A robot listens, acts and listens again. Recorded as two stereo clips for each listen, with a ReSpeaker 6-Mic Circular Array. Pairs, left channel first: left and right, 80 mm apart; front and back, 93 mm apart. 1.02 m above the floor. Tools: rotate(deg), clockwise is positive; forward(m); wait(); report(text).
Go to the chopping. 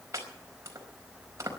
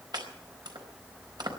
rotate(140)
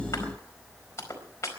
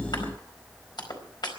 rotate(-35)
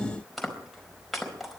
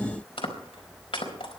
forward(1.0)
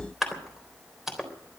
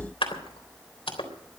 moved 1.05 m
forward(1.0)
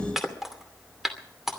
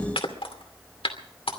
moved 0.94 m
forward(1.0)
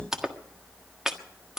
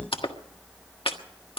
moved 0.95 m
forward(1.0)
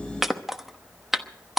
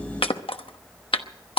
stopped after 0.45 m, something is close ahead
report("Arrived at the chopping, straight ahead.")